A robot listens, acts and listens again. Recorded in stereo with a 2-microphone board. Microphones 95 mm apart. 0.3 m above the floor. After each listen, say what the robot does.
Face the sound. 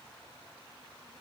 Keep listening.
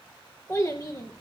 Turn 30° left.
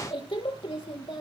Turn 115° left.
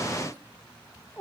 Turn 20° left.
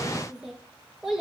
Found it: a child speaking, straight ahead.